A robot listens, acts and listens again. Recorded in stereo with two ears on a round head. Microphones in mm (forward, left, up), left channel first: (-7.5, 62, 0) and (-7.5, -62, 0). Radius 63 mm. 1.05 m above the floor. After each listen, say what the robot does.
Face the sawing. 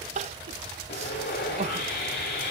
Turn 90° left.
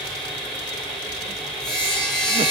Facing the sawing.